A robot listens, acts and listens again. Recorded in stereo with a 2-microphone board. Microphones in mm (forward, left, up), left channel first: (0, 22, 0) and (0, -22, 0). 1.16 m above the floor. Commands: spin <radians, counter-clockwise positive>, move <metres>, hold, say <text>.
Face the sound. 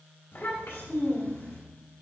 spin 1.57
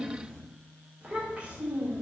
spin -0.61
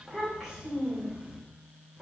spin -0.26
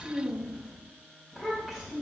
say Facing the child speaking, 2 to 4 m away.